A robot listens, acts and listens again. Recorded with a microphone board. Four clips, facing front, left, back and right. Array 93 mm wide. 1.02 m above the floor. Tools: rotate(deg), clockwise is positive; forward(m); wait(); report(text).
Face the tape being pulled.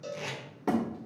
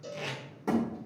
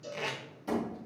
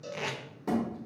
rotate(115)
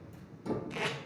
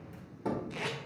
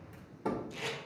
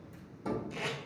rotate(-25)
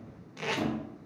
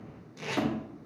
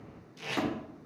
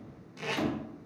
report("Found it: tape being pulled, straight ahead.")